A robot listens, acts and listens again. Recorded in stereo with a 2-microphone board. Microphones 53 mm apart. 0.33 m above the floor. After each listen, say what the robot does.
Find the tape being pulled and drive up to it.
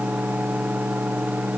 Keep listening.
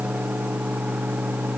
Keep listening.
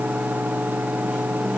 I can't make out tape being pulled.